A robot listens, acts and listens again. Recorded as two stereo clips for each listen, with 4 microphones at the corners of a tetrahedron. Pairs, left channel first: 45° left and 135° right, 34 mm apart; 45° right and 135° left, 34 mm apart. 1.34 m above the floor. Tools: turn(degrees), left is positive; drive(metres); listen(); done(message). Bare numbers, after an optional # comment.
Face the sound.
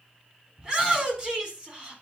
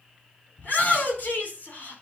# The shout: 75° right.
turn(-75)
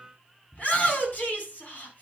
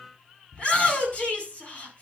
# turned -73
done("Facing the shout, over 4 m away.")